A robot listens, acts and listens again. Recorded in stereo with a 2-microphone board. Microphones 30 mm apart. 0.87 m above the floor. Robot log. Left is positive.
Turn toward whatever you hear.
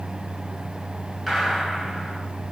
cmd yaw -30
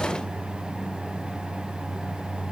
cmd idle
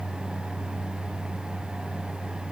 end: I heard a gunshot, but can't make it out now. It was about 20° left or 140° right.